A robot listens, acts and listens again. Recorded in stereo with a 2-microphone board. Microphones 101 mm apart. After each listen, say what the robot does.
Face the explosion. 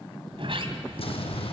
Turn 70° left.
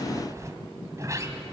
Keep listening.
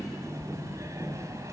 I heard an explosion, but can't make it out now. It was about straight ahead or 40° left.